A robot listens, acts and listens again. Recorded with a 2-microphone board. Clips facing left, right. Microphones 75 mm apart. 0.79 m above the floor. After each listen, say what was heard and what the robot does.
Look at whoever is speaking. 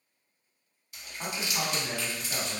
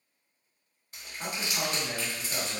The man speaking: about 25° left or 155° left. Turn 25° left.
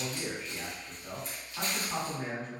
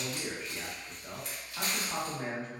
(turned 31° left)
Found it: a man speaking, straight ahead, 1 to 2 m away.